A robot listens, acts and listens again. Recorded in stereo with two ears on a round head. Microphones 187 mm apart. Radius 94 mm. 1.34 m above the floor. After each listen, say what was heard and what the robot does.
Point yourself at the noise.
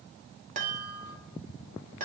The chime: about 40° right or 140° right. Turn 40° right.
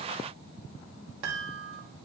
So it is at 95° right. Turn 95° right.
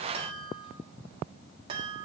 The chime is now 25° right. Turn 25° right.
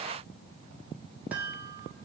The chime is now 10° right. Turn 10° right.
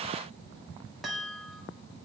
Facing the chime, 1 to 2 m away.